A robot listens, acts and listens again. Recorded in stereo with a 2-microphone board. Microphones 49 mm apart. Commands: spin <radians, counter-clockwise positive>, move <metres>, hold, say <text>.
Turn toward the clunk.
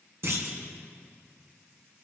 spin -1.05
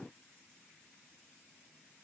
hold
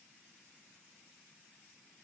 say I heard a clunk, but can't make it out now. It was about straight ahead or 60° right.